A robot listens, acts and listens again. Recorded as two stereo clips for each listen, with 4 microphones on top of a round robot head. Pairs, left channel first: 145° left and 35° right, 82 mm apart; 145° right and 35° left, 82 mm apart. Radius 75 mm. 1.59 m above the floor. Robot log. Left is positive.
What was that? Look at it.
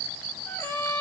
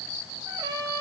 note: The trumpet: 75° left.
cmd yaw +75
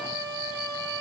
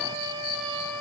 end: Found it: a trumpet, straight ahead, 2 to 4 m away.